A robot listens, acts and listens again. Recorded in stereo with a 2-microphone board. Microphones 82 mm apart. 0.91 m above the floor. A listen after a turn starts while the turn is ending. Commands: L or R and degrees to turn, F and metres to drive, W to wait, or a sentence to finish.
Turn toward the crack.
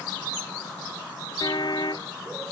W
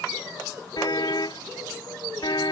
W
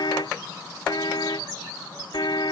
I can't make out a crack, only a car horn.